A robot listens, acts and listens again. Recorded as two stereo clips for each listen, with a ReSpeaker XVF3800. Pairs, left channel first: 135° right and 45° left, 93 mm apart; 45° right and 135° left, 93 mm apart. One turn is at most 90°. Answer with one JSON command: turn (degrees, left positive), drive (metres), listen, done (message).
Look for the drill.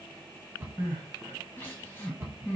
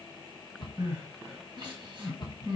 {"listen": true}
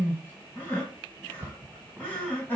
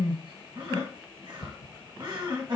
{"listen": true}
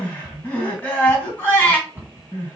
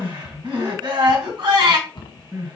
{"done": "I can't make out a drill, only a cupboard door and crying."}